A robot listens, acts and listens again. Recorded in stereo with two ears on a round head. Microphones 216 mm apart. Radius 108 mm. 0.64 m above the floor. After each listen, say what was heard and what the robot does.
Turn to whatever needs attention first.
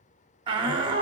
The shout: about 20° right or 160° right. Turn 20° right.
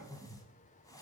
Keep listening.
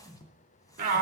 So it is at 135° right. Turn 135° right.
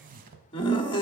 The shout is now 25° left. Turn 25° left.
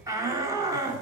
The shout is now 15° right. Turn 15° right.
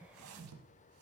Keep listening.
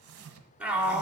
Found it: a shout, straight ahead.